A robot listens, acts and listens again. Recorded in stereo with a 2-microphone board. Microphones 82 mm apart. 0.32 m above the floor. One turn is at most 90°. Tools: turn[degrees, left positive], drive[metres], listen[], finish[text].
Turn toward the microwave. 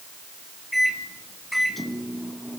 Action: turn[30]
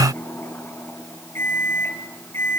Thought: So it is at 150° left.
Action: turn[90]
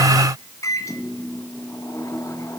Thought: The microwave is now 45° left.
Action: turn[45]
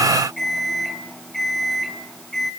Action: finish[Found it: a microwave, straight ahead.]